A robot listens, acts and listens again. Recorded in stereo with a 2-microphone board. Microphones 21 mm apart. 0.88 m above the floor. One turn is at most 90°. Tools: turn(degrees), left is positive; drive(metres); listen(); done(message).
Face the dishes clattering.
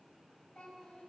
listen()
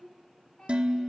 turn(degrees=-65)
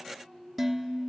done("Facing the dishes clattering.")